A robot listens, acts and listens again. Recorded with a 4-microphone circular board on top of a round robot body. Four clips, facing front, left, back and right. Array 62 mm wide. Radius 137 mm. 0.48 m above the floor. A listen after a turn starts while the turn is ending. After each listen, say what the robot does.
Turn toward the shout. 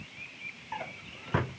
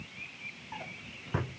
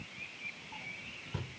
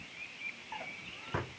Keep listening.
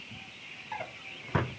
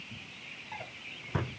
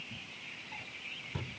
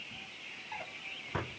Keep listening.
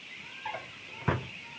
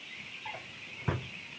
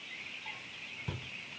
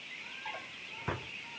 I can't make out a shout to turn to.